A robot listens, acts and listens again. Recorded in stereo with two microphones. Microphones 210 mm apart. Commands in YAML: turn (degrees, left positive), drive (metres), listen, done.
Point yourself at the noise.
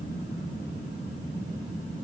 listen: true
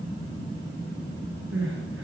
turn: -90
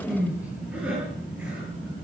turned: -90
done: "Facing the crying."